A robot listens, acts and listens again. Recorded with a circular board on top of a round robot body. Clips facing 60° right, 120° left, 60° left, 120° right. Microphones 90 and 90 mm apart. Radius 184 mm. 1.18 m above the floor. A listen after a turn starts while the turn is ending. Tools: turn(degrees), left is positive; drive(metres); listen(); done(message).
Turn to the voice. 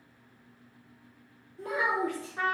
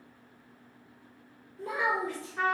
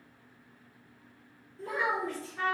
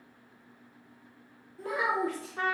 turn(degrees=-90)
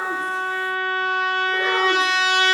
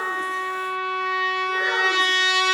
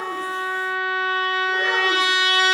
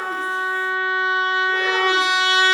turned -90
listen()
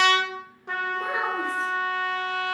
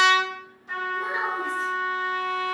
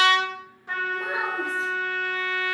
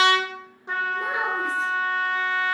listen()
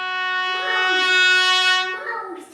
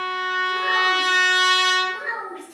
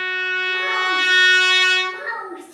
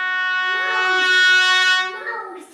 done("Facing the child speaking, 1 to 2 m away.")